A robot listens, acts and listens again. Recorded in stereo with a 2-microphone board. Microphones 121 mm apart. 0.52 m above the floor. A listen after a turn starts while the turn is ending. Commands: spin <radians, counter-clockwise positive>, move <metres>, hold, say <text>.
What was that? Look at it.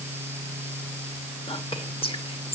spin 0.87
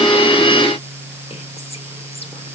hold
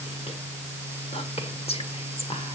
spin 1.22
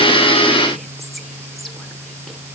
hold
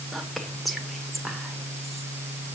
say Facing the whispering, 1 to 2 m away.